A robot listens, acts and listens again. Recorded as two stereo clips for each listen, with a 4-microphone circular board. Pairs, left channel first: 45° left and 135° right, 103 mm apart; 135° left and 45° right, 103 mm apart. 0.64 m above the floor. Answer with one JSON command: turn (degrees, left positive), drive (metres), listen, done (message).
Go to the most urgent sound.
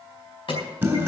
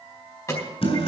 {"turn": 75}
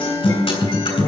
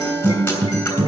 {"listen": true}
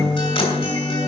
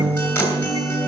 {"listen": true}
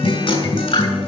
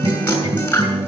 {"done": "I heard an alarm from this way, but can't make it out now. I did not reach it."}